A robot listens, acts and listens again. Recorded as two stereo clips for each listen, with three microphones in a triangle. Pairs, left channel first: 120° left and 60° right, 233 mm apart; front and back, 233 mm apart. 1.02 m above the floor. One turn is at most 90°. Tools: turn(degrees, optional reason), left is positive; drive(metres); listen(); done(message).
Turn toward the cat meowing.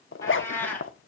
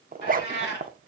turn(degrees=35, reason="The cat meowing: 35° left.")
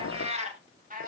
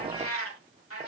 turn(degrees=-10, reason="The cat meowing is now 10° right.")
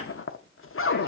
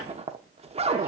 listen()
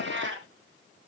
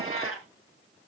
turn(degrees=-25, reason="The cat meowing is now 25° right.")
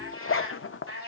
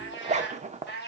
turn(degrees=-45, reason="The cat meowing is now 45° right.")
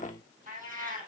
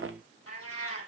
done("Facing the cat meowing.")